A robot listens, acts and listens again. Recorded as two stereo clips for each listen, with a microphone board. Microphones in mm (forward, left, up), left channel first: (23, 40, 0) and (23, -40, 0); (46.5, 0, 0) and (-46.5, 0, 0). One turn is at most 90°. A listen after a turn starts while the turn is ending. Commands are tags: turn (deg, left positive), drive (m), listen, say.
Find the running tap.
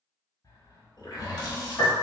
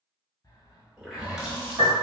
<turn deg="90"/>
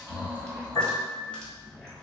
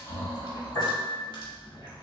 <turn deg="10"/>
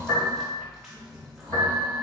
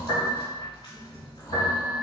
<say>Facing the running tap.</say>